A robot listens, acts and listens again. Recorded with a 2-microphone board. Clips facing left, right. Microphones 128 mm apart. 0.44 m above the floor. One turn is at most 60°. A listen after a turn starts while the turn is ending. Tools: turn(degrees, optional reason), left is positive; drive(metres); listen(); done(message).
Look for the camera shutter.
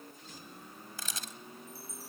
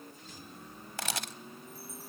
turn(degrees=-60, reason="The camera shutter: about 75° right or 105° right.")
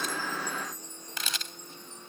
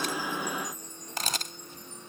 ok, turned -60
turn(degrees=-45, reason="So it is at 45° right.")
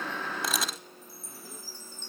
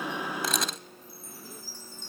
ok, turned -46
done("Facing the camera shutter.")